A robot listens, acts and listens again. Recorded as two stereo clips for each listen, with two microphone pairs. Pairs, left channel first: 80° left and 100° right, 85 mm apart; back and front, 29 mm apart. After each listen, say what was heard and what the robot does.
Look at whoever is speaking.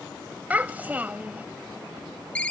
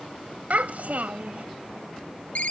The child speaking: 30° right. Turn 30° right.
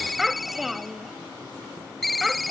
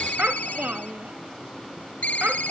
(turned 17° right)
The child speaking is now 10° right. Turn 10° right.
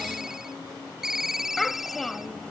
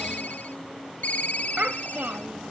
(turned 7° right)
Facing the child speaking.